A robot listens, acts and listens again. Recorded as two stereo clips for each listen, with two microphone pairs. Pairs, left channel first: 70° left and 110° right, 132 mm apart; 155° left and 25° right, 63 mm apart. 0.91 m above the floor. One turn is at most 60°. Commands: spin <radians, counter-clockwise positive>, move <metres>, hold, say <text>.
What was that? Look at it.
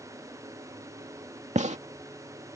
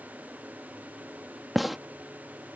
spin -1.05
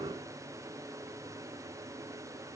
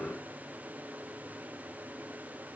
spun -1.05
spin -0.96
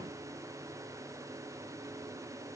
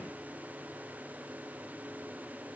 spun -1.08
spin 0.17
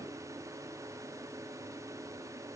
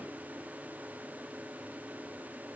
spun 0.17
say I heard a gunshot from this way, but can't make it out now.